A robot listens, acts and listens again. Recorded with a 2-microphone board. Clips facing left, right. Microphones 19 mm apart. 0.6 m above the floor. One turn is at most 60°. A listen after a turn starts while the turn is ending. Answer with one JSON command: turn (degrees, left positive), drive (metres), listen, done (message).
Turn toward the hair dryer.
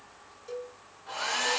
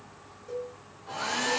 {"turn": 20}
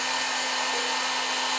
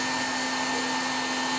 {"turn": 60}
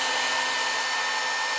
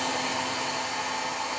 {"turn": 60}
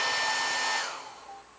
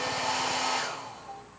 {"done": "Found it: a hair dryer, straight ahead."}